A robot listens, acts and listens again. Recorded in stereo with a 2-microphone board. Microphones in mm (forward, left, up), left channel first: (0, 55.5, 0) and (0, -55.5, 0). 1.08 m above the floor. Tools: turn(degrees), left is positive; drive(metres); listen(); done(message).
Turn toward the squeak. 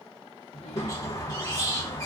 turn(degrees=30)
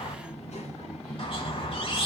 turn(degrees=120)
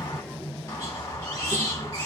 turn(degrees=30)
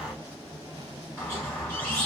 turn(degrees=15)
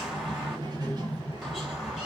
done("Found it: a squeak, straight ahead.")